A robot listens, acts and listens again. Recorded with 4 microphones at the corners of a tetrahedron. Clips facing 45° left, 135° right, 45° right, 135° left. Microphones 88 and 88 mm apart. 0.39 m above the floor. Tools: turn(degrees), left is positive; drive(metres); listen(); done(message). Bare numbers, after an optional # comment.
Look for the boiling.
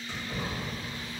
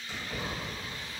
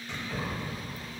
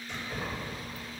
listen()
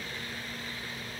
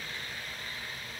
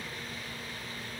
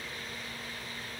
listen()
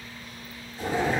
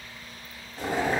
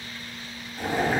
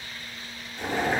# The boiling: 125° right.
turn(-125)
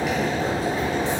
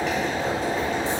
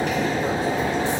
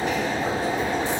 # The boiling is now 40° right.
turn(-40)
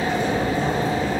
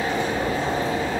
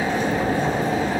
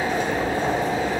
# The boiling is now 10° right.
turn(-10)
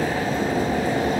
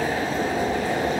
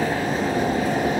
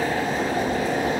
done("Found it: boiling, straight ahead, under 1 m away.")